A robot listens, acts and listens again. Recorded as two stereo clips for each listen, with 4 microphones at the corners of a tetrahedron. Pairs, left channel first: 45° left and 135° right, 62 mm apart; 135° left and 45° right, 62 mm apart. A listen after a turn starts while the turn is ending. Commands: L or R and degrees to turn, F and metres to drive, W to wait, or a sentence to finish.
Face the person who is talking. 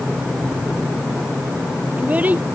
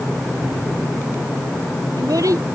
R70
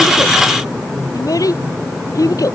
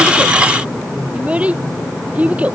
L25
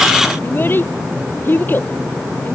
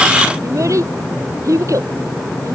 R15
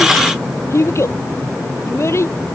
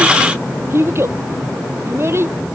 Found it: a child speaking, straight ahead.